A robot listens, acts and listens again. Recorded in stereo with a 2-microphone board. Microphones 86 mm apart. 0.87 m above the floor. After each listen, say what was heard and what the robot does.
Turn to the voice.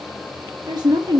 The woman speaking: about 55° right or 125° right. Turn 55° right.
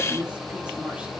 So it is at 15° right. Turn 15° right.
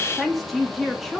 Found it: a woman speaking, straight ahead, 1 to 2 m away.